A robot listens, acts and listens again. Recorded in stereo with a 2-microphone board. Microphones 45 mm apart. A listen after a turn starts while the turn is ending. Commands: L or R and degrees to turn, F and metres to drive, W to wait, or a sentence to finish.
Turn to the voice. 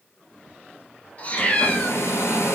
W
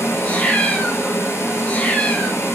W
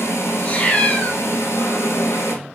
I can't make out anyone speaking, only a hair dryer and a cat meowing.